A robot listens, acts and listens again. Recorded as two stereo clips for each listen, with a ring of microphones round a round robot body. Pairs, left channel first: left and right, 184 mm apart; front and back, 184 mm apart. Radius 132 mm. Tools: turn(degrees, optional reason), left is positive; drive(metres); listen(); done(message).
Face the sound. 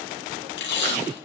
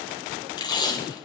turn(degrees=70, reason="The tape being pulled: 70° left.")
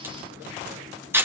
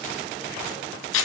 turn(degrees=-10, reason="The tape being pulled is now 10° right.")
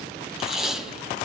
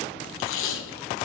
done("Facing the tape being pulled.")